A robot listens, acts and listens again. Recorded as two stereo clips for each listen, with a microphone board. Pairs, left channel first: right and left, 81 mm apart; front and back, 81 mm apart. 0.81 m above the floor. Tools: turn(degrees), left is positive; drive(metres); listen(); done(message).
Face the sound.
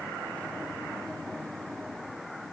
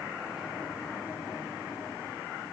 listen()
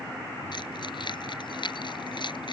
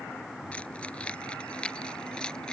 turn(degrees=-80)
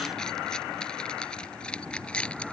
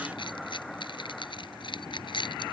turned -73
turn(degrees=-15)
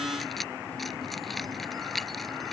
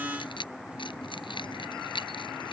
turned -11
done("Found it: keys jangling, straight ahead.")